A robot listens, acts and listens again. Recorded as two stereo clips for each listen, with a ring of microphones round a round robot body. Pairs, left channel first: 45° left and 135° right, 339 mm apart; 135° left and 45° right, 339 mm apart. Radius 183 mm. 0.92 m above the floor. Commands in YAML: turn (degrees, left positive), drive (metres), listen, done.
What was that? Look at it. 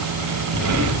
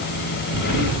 turn: -95
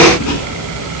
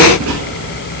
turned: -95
done: "Facing the writing, 2 to 4 m away."